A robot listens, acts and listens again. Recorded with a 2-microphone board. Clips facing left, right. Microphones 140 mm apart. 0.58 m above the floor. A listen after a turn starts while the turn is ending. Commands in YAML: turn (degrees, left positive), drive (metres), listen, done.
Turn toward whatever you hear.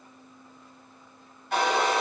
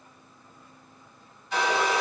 turn: 60
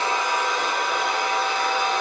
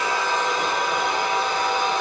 done: "Facing the hair dryer."